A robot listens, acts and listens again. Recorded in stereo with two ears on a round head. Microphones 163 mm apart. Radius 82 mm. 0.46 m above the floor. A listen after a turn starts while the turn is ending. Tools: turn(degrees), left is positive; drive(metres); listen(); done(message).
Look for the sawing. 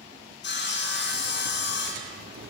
turn(degrees=65)
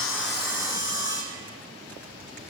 turn(degrees=45)
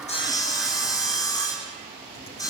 turn(degrees=20)
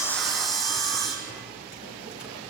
done("Facing the sawing, 2 to 4 m away.")